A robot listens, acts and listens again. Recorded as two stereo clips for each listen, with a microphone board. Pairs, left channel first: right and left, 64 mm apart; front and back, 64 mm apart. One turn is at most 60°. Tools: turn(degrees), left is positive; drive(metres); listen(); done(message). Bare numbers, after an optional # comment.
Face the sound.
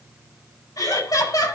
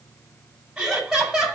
# The laughter: 95° right.
turn(-60)
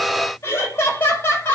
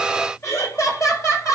# The laughter is now 35° right.
turn(-35)
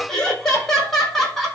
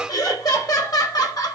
done("Facing the laughter, over 4 m away.")